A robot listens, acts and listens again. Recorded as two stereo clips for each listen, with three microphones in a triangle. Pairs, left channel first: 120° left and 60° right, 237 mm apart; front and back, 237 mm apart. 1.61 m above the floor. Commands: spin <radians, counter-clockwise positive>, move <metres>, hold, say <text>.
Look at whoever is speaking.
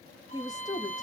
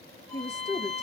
spin 0.79
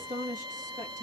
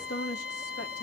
say Found it: a woman speaking, straight ahead, 2 to 4 m away.